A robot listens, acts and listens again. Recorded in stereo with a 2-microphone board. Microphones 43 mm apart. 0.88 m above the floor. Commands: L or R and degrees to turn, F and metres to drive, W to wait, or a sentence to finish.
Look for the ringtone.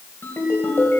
L55
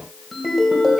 Facing the ringtone.